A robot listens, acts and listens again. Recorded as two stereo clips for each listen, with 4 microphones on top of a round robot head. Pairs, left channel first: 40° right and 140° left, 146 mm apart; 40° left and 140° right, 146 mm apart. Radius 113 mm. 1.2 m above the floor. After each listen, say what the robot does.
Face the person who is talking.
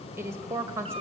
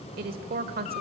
Turn 150° right.
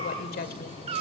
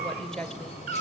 Turn 45° right.
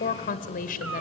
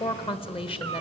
Turn 10° right.
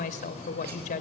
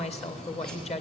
Facing the woman speaking.